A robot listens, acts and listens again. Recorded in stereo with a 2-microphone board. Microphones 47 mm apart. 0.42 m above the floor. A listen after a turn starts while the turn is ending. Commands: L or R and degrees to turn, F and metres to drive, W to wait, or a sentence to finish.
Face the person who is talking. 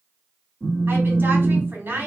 R55
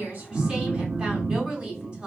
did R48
R35
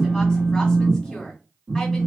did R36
W
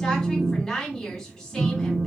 Found it: a woman speaking, straight ahead, 1 to 2 m away.